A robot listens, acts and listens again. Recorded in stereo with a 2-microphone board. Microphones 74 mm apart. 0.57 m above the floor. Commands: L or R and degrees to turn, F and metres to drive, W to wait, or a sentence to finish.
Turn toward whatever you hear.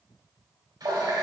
R65
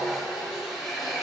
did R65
Found it: a running tap, straight ahead.